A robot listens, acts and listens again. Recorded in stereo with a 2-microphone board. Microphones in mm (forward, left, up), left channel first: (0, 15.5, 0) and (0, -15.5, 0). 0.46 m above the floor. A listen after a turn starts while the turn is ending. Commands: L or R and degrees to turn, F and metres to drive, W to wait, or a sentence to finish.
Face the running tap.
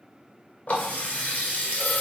L60
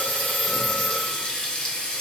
L30
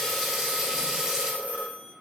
R25
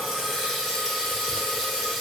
Found it: a running tap, straight ahead.